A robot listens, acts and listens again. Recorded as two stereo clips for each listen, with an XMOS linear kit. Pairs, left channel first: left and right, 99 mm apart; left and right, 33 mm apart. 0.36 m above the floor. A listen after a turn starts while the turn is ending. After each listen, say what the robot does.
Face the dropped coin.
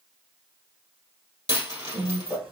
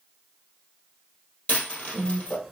Turn 40° left.
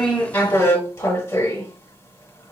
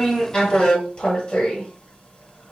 Keep listening.
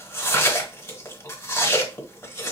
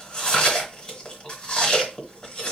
I heard a dropped coin, but can't make it out now. It was about straight ahead or 100° left.